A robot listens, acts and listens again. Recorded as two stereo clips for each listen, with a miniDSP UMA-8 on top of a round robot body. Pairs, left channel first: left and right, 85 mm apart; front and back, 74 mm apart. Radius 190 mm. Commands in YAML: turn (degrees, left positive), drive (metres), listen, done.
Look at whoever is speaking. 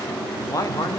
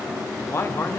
turn: 50
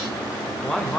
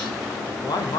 turn: 10
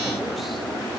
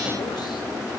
listen: true
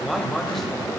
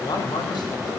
done: "Found it: a man speaking, straight ahead, 2 to 4 m away."